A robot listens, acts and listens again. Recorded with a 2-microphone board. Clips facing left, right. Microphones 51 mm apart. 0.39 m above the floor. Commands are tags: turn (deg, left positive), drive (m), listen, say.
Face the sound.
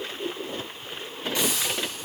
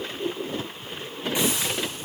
<turn deg="-20"/>
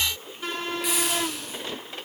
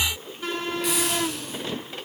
<say>Found it: a hiss, straight ahead, 2 to 4 m away.</say>